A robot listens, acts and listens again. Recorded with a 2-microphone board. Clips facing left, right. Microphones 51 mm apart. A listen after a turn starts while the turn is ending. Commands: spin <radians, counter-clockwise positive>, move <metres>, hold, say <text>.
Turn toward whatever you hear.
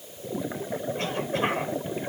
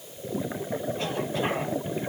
hold
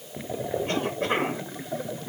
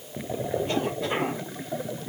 hold
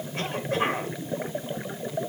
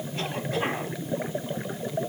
spin 1.13
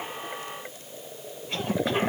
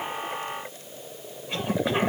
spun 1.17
say Found it: a cough, straight ahead, 2 to 4 m away.